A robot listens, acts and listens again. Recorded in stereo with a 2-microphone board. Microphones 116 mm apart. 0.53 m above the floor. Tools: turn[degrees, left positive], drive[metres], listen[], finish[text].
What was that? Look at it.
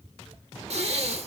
Thought: The breathing: about 60° right or 120° right.
Action: turn[-60]
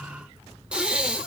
Thought: So it is at 10° right.
Action: turn[-10]
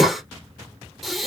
Action: finish[Facing the breathing, under 1 m away.]